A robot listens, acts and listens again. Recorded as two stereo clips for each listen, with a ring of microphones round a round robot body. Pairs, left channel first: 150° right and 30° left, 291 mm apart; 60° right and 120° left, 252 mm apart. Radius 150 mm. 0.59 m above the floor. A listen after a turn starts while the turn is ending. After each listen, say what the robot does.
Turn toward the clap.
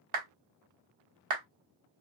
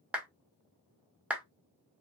Turn 35° left.
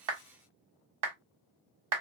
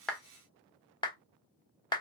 Turn 10° left.
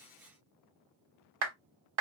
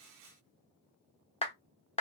Facing the clap.